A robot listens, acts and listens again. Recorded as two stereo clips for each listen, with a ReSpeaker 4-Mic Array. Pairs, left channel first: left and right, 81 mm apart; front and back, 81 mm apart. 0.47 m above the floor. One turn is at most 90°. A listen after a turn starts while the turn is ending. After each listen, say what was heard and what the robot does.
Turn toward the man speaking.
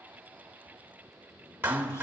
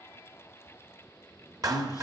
The man speaking: 40° left. Turn 40° left.
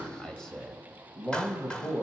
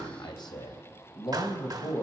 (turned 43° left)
The man speaking is now 30° left. Turn 30° left.
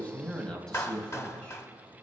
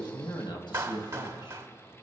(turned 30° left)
The man speaking is now 15° left. Turn 15° left.
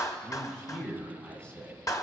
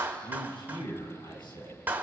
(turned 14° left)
The man speaking is now 15° left. Turn 15° left.
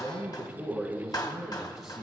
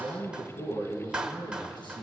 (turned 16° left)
Facing the man speaking.